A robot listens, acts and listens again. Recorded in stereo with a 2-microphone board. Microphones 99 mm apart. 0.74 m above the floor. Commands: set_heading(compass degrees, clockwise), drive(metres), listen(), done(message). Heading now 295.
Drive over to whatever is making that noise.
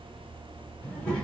set_heading(265)
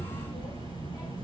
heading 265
set_heading(125)
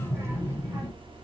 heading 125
set_heading(150)
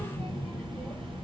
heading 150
drive(1.0)
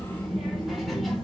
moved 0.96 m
drive(1.0)
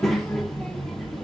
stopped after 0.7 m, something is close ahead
done("I am next to the child speaking.")